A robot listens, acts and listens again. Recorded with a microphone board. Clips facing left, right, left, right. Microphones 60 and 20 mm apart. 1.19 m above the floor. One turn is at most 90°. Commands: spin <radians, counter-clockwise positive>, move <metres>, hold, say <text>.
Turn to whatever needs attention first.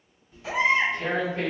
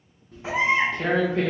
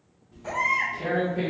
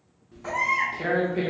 spin -0.44
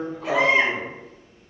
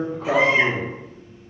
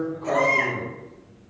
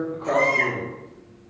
say Facing the baby crying.